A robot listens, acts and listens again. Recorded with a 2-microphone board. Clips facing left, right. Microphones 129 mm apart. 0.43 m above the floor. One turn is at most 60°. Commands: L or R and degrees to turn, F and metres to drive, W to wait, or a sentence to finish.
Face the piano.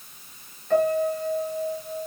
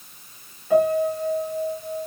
R30
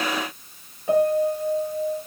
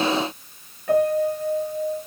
L25
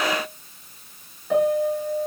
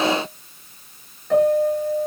Facing the piano.